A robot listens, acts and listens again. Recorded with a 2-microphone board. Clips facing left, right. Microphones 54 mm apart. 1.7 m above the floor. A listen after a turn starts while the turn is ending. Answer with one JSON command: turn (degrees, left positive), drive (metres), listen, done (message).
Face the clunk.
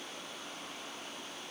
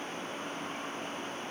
{"listen": true}
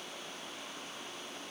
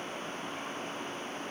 {"listen": true}
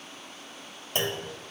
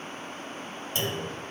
{"turn": 50}
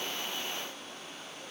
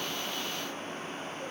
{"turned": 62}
{"listen": true}
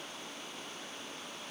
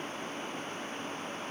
{"done": "I heard a clunk, but can't make it out now. It was about 15° right or 70° left."}